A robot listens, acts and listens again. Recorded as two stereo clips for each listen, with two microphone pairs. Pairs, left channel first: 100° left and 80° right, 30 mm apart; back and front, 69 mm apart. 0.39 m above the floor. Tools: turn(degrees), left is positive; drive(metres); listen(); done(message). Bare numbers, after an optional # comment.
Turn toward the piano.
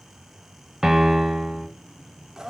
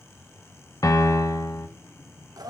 # The piano: 155° right.
turn(-155)
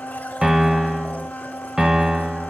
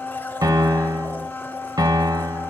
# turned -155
# The piano is now 20° right.
turn(-20)
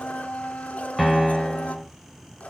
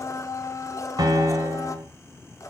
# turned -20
done("Found it: a piano, straight ahead, under 1 m away.")